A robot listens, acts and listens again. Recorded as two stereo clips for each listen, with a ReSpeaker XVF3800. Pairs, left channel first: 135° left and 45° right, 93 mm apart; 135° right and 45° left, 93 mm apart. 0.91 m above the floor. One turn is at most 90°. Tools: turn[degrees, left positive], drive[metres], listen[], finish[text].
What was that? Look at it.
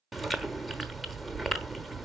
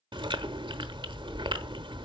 Thought: The chewing: 45° left.
Action: turn[45]
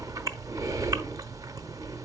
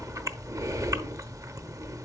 Action: finish[Found it: chewing, straight ahead, under 1 m away.]